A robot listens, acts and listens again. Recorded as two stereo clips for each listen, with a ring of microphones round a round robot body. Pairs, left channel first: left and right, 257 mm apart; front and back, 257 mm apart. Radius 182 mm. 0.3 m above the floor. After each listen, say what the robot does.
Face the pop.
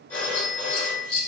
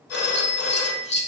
Keep listening.
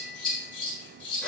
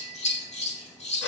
Keep listening.
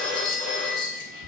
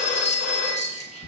I can't make out a pop, only a phone ringing and scissors.